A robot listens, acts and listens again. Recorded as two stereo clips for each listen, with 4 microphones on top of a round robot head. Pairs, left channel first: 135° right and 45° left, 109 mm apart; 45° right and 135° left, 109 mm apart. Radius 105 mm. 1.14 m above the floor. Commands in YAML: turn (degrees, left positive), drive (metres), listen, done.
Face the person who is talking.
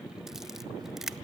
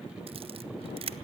listen: true
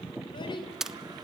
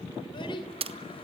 turn: -90
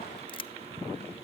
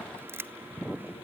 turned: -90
listen: true
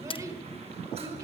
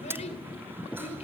turn: -20
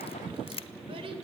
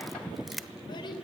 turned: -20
done: "Facing the child speaking."